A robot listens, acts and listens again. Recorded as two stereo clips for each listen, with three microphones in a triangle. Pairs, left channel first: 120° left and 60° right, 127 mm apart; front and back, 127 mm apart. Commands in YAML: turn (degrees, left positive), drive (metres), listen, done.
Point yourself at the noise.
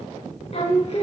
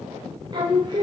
turn: 135
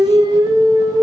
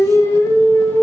turn: -65
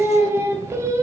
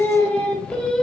turn: -80
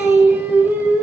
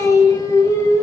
done: "Found it: singing, straight ahead."